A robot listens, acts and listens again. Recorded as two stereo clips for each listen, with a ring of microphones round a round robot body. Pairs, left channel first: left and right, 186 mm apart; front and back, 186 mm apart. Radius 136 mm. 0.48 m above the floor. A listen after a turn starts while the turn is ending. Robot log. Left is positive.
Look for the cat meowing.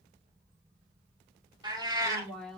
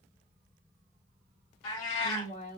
note: The cat meowing: 15° right.
cmd yaw -15
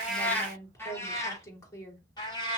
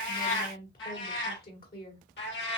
note: The cat meowing is now 25° left.
cmd yaw +25
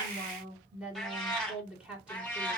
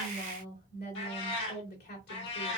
note: The cat meowing is now 10° left.
cmd yaw +10
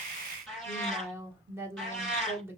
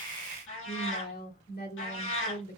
end: Found it: a cat meowing, straight ahead.